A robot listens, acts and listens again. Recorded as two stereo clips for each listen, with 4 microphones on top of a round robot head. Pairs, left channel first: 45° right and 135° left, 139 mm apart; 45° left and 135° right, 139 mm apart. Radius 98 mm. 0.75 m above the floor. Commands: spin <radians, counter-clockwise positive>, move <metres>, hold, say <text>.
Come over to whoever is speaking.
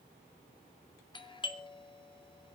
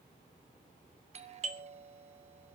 hold
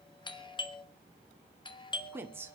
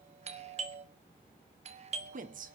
spin -2.62
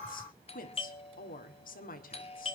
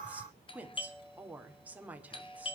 spin -0.96
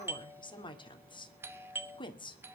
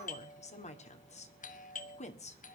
spin 0.17
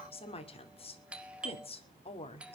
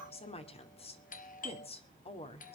move 1.0
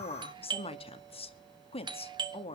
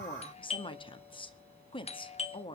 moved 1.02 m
move 1.0
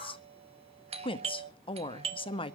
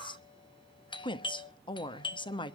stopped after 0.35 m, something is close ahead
say I am next to the woman speaking.